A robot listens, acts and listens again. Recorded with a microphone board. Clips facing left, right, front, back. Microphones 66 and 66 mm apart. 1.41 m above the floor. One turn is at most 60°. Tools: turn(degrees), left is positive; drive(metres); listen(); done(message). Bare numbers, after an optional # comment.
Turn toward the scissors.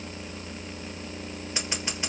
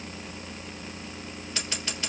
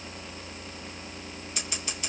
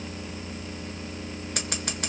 # The scissors: 160° left.
turn(60)
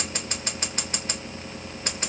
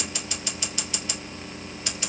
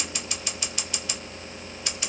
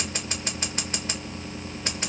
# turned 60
# The scissors is now 135° left.
turn(60)
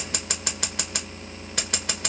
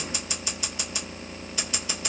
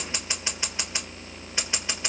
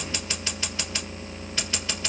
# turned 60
# The scissors is now 65° left.
turn(60)
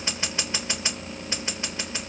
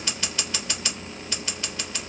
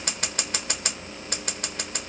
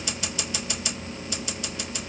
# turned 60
# The scissors is now 25° left.
turn(25)
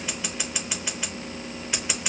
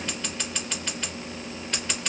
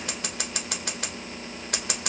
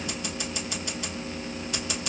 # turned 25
# The scissors is now 10° left.
turn(10)
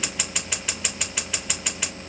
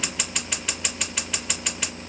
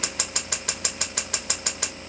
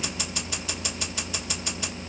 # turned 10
done("Found it: scissors, straight ahead, 1 to 2 m away.")